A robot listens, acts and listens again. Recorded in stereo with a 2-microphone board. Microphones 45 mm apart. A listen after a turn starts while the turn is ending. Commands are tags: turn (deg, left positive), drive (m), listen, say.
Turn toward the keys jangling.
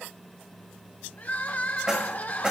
<turn deg="-20"/>
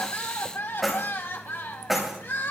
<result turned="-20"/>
<turn deg="-30"/>
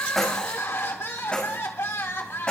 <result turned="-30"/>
<turn deg="20"/>
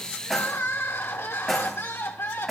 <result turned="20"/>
<say>Facing the keys jangling.</say>